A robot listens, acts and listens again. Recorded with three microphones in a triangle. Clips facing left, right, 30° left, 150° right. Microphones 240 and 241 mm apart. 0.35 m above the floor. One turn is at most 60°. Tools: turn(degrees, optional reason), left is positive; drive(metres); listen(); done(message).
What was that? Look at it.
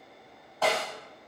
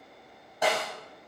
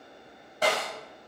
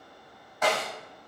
turn(degrees=-20, reason="The snare drum: 20° right.")
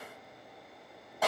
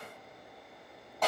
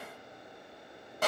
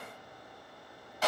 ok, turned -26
turn(degrees=10, reason="The snare drum is now 10° left.")
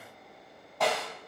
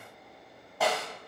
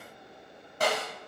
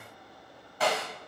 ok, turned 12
done("Facing the snare drum, 2 to 4 m away.")